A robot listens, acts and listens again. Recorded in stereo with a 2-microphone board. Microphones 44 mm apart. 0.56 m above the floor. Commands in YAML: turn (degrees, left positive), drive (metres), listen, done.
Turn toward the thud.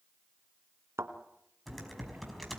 turn: -90
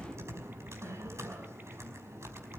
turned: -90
done: "Facing where the thud came from. I can't hear it now."